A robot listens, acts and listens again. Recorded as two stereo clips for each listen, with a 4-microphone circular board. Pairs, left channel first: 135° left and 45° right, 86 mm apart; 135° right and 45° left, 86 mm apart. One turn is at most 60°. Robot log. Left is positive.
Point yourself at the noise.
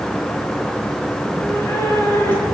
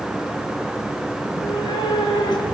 note: The cat meowing: 160° right.
cmd yaw -60
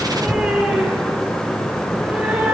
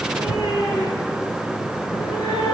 note: The cat meowing is now 115° right.
cmd yaw -60
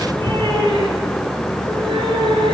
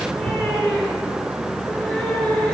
note: The cat meowing is now 55° right.
cmd yaw -55
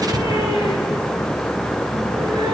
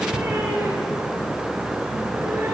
note: The cat meowing is now 15° right.
cmd yaw -15
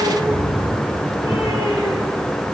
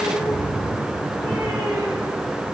end: Found it: a cat meowing, straight ahead, over 4 m away.